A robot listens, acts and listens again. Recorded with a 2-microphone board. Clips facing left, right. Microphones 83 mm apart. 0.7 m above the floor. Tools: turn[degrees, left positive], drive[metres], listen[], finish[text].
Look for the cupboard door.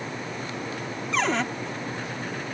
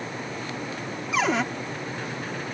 Action: turn[-30]
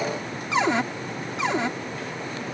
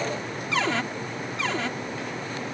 Thought: So it is at 20° left.
Action: turn[20]
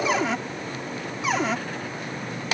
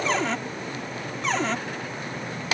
Action: finish[Facing the cupboard door.]